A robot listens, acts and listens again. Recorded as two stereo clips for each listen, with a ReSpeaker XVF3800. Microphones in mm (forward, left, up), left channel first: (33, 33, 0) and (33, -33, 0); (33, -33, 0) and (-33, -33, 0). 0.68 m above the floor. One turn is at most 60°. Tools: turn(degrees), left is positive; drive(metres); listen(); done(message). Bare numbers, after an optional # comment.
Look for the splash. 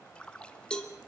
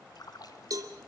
# The splash: 15° left.
turn(15)
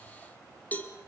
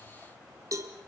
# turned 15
done("I heard a splash from this way, but can't make it out now.")